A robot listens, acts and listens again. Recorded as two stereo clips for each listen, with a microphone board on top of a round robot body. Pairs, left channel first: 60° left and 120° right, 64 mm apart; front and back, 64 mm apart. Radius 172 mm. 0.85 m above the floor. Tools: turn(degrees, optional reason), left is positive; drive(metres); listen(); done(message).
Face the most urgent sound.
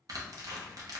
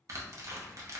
listen()
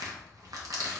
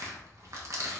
listen()
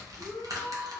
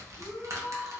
turn(degrees=-100, reason="The shout: 100° right.")
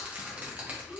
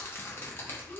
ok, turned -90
turn(degrees=-10, reason="The shout is now 10° right.")
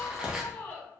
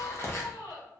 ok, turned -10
done("Found it: a shout, straight ahead, 1 to 2 m away.")